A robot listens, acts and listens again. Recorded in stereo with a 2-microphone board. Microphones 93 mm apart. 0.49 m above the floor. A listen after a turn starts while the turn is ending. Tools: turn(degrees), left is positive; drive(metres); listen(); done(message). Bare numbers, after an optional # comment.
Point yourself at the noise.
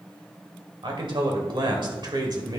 # The man speaking: about 50° right or 130° right.
turn(-50)
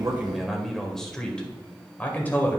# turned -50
# So it is at 20° left.
turn(20)
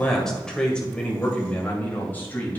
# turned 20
# The man speaking is now 25° left.
turn(25)
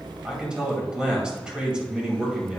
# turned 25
# The man speaking is now 10° right.
turn(-10)
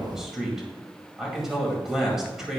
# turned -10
done("Facing the man speaking.")